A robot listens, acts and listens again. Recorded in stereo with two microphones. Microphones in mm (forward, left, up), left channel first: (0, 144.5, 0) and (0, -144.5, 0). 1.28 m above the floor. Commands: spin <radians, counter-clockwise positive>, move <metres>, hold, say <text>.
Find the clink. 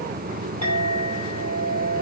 spin -1.13
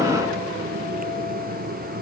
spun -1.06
hold
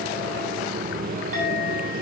hold
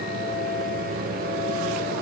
say I heard a clink, but can't make it out now. It was about 5° right or 50° right.